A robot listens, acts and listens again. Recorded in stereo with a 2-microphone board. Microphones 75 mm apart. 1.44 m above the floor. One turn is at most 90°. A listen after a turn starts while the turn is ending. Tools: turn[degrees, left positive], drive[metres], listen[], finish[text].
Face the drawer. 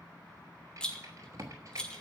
Thought: The drawer: about 40° right or 140° right.
Action: turn[-40]
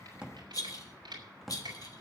Action: finish[Found it: a drawer, straight ahead.]